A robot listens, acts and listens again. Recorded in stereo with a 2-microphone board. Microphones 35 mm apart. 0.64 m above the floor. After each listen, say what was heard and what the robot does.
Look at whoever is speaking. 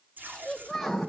Turn 30° left.
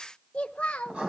So it is at 145° left. Turn 145° left.
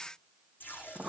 Keep listening.
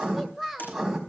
Facing the child speaking.